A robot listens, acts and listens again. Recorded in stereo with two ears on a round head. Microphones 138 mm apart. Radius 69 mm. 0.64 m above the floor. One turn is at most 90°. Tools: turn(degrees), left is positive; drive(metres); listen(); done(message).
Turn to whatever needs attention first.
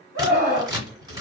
turn(degrees=-50)
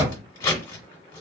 listen()
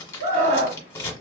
turn(degrees=-65)
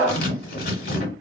turn(degrees=-15)
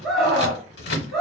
done("Found it: a scream, straight ahead, 1 to 2 m away.")